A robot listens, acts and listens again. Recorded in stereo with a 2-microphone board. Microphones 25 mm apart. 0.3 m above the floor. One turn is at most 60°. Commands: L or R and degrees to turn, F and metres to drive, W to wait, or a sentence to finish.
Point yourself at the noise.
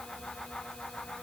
W
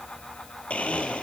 L60
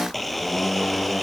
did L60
Facing the blender.